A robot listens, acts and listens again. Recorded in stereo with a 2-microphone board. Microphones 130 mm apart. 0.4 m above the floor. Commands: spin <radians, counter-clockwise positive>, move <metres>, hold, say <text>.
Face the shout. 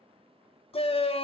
spin 0.79
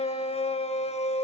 spin 1.31
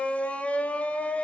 spin 0.17
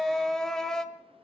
say Found it: a shout, straight ahead.